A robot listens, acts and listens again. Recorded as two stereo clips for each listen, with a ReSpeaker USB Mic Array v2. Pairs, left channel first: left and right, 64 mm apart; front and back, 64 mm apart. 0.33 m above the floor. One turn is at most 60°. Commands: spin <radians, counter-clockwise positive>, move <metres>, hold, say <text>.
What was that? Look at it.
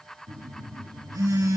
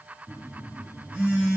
spin -1.05
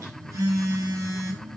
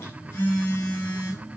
spin -0.87
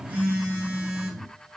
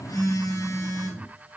spin -0.35
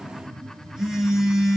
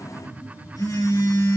say Facing the phone buzzing, over 4 m away.